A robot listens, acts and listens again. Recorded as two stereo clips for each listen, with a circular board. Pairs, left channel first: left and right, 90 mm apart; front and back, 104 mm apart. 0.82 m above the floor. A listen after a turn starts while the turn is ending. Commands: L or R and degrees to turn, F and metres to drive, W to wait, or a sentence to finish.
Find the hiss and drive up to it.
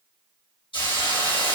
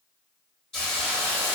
L85
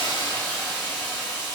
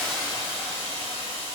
F1.0
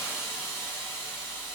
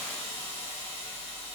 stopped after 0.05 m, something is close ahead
Blocked. The hiss is further on, straight ahead.